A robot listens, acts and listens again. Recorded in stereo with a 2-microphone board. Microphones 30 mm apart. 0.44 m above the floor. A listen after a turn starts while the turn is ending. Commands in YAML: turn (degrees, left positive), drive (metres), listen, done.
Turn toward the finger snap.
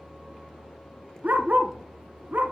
listen: true
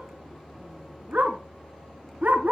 listen: true
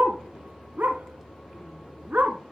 done: "I can't make out a finger snap, only a dog barking."